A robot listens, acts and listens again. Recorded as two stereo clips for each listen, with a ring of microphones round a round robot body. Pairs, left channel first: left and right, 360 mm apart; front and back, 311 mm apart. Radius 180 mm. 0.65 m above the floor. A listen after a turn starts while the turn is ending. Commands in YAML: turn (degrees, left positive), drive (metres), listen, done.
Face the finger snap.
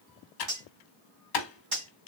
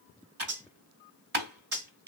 listen: true
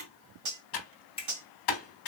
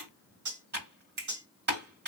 turn: 165
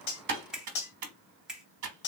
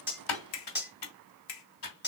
done: "Found it: a finger snap, straight ahead."